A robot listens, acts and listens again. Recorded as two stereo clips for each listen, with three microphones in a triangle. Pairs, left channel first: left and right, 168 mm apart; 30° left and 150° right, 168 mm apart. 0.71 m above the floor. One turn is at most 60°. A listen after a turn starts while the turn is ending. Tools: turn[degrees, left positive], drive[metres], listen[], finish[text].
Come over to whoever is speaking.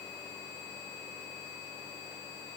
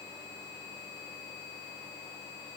Action: listen[]
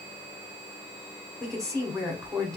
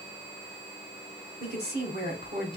Thought: The woman speaking: 160° right.
Action: turn[-60]
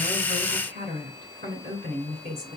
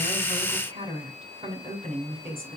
Thought: The woman speaking is now 95° right.
Action: turn[-60]
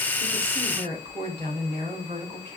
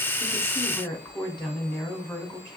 Thought: The woman speaking is now 35° right.
Action: turn[-35]
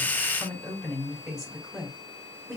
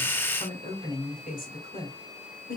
Action: drive[1.0]
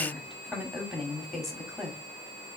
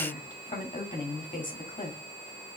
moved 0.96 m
Action: drive[1.0]
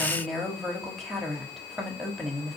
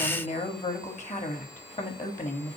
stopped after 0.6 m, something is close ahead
Action: finish[I am next to the woman speaking.]